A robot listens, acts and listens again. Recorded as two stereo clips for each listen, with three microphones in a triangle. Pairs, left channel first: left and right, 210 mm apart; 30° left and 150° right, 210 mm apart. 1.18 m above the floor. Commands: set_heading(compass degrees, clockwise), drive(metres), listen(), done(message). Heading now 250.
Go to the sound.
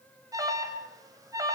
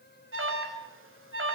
set_heading(55)
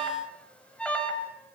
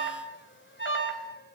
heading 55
drive(1.0)
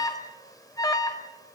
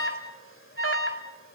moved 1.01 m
set_heading(40)
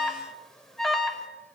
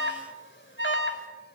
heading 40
drive(1.0)
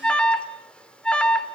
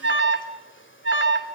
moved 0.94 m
drive(1.0)
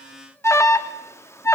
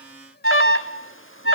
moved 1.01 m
set_heading(25)
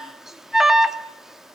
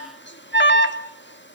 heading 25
drive(1.0)
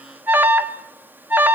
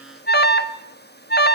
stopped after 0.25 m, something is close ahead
set_heading(35)
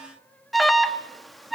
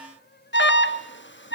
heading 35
done("I am next to the alarm.")